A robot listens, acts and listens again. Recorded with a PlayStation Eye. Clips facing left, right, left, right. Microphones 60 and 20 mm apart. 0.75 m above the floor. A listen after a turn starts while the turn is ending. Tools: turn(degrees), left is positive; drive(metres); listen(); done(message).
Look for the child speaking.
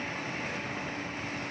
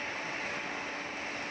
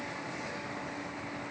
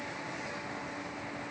listen()
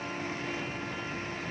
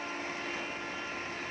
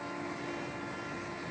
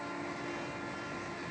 listen()
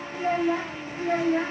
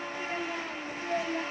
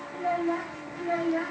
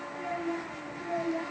turn(degrees=90)
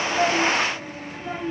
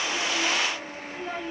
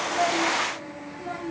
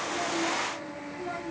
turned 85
turn(degrees=20)
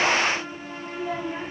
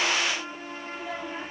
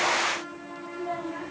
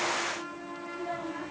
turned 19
done("Found it: a child speaking, straight ahead, 2 to 4 m away.")